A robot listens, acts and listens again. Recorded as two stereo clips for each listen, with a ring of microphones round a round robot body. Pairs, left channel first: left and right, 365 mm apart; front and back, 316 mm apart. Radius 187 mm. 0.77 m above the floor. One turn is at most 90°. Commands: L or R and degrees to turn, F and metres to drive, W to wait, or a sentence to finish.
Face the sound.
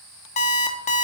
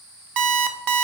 L90
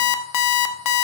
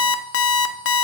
L50
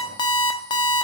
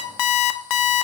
L10
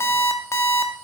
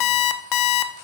Facing the alarm clock.